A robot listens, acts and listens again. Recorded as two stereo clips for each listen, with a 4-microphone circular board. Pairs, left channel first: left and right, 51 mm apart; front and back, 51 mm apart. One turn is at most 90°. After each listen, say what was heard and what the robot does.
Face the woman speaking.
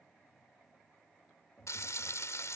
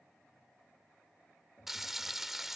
Keep listening.
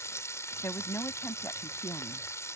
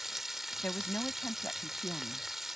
The woman speaking: 55° left. Turn 55° left.
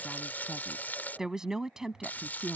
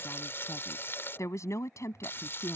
The woman speaking is now 10° right. Turn 10° right.
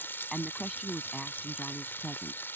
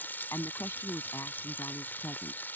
Found it: a woman speaking, straight ahead.